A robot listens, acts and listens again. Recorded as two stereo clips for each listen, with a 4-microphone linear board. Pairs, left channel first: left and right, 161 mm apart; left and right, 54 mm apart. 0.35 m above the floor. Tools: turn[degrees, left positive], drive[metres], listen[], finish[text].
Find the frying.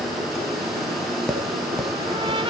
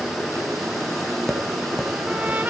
Action: listen[]
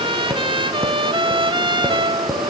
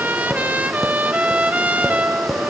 Action: listen[]
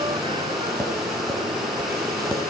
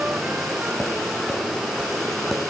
Action: finish[I can't make out frying to turn to.]